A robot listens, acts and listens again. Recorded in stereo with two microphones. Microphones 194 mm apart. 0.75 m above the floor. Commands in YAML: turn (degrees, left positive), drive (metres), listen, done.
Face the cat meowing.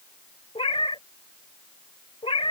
turn: 30
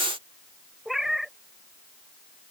done: "Facing the cat meowing."